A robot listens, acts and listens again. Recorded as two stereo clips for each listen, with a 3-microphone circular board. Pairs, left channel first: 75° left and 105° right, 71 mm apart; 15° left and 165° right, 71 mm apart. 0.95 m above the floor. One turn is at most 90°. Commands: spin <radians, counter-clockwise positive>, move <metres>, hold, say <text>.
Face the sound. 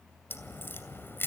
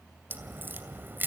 spin 1.57
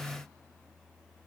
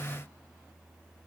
spin 0.70
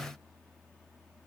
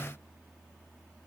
say Facing where the crack came from. I can't hear it now.